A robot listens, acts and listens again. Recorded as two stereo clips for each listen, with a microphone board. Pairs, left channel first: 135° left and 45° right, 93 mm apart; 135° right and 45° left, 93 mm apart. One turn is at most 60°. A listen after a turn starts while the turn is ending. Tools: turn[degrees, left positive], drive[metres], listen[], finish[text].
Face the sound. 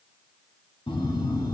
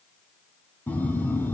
Thought: The phone buzzing: 155° left.
Action: turn[60]
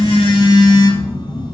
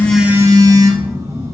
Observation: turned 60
Thought: The phone buzzing is now 95° left.
Action: turn[60]
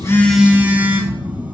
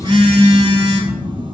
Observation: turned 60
Thought: The phone buzzing is now 25° left.
Action: turn[25]
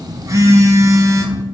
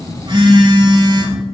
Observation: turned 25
Thought: The phone buzzing is now 10° left.
Action: turn[10]
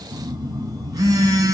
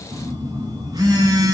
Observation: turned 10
Action: finish[Facing the phone buzzing.]